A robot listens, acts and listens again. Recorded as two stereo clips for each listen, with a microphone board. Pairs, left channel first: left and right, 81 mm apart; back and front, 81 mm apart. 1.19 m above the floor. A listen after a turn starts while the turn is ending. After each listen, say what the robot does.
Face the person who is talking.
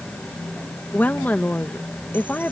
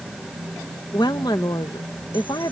Turn 160° left.
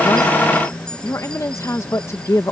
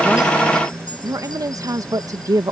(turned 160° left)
Turn 40° left.
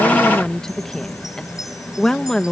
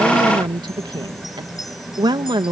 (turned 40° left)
Found it: a woman speaking, straight ahead.